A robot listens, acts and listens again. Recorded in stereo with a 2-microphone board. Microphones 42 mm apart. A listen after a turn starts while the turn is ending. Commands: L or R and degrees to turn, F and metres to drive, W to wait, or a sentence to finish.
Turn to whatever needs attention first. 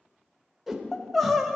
L30
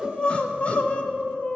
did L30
L150
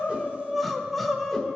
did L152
Facing the crying, under 1 m away.